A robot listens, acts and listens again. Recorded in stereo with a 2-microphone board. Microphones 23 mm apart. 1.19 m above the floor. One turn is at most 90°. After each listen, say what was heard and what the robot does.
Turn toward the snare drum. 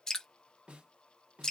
The snare drum: about 60° right or 120° right. Turn 60° right.
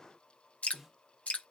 Found it: a snare drum, straight ahead, 1 to 2 m away.